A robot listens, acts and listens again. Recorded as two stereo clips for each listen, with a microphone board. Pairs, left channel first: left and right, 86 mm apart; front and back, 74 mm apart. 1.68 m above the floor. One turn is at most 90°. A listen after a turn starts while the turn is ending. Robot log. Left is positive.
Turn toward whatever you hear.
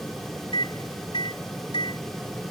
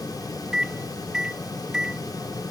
note: The microwave: 100° left.
cmd yaw +90
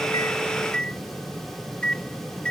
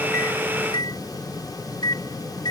note: The microwave is now 10° left.
cmd yaw +10
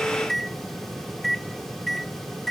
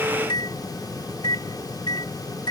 end: Facing the microwave.